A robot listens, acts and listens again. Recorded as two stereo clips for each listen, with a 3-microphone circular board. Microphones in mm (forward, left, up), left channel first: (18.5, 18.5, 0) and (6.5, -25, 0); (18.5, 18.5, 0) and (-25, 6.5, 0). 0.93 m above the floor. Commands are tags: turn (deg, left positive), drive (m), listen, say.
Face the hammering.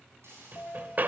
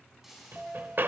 <turn deg="-140"/>
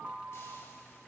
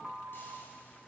<listen/>
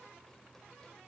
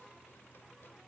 <listen/>
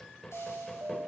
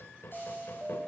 <say>Facing the hammering.</say>